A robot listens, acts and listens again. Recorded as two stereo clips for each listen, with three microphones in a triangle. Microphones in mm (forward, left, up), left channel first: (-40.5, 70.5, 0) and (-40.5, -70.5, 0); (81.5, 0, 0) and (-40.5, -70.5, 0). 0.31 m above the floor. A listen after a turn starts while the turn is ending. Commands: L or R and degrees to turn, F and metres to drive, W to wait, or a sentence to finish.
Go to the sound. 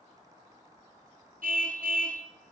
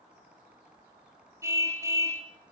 R80
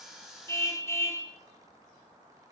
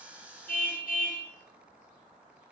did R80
L20
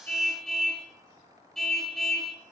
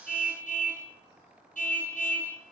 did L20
F1.0
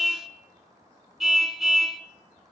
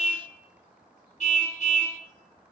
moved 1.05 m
F1.0
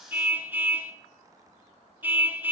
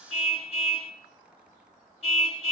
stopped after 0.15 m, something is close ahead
R15
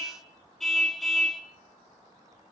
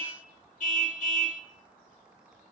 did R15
Arrived at the car horn, straight ahead.